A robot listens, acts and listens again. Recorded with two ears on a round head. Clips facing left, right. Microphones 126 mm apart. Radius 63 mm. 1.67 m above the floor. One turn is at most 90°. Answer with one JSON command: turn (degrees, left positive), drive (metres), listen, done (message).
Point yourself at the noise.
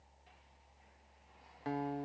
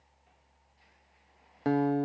{"turn": -60}
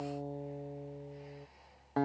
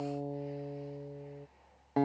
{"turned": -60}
{"turn": -15}
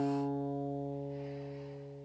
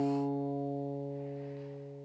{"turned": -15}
{"turn": -10}
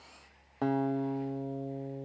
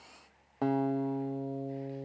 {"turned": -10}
{"done": "Facing the guitar."}